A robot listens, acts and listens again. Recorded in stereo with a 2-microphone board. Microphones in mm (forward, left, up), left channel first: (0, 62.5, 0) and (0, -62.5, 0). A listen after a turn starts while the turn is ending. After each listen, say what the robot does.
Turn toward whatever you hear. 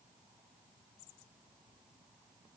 Keep listening.
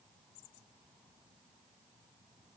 Keep listening.
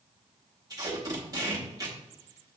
Turn 30° right.
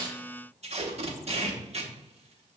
Turn 120° right.
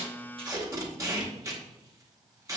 Turn 25° right.
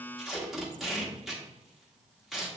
Found it: tape being pulled, straight ahead, 1 to 2 m away.